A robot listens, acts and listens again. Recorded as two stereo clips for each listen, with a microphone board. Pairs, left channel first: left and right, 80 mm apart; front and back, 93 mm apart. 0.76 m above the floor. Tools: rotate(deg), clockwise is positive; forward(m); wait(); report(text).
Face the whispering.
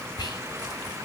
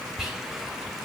rotate(-95)
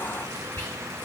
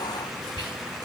rotate(-25)
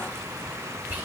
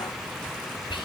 rotate(25)
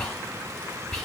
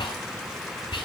report("Found it: whispering, straight ahead.")